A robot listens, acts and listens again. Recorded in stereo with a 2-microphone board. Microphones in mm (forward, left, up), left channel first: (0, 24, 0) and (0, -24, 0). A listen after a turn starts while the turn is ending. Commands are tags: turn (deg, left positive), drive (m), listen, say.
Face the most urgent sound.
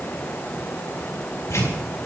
<listen/>
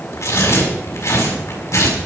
<listen/>
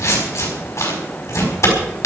<say>I can't make out anything urgent to turn to.</say>